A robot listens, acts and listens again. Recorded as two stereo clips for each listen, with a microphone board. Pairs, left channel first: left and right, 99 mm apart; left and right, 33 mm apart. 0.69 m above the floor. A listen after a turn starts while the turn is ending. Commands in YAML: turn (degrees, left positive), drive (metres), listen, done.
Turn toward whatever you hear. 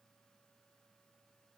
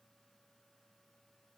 listen: true
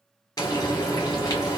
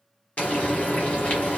turn: 40
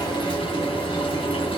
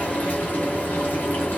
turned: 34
turn: 105
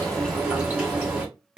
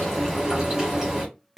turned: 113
turn: -10
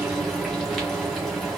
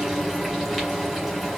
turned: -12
done: "Facing the frying."